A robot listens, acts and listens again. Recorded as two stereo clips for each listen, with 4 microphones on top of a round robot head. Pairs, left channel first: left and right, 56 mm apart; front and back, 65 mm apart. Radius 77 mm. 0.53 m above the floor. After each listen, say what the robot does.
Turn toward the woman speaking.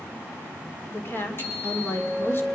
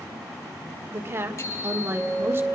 Turn 135° left.
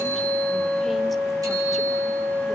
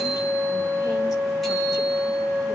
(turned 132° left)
Keep listening.
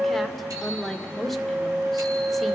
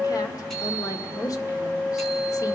Facing the woman speaking.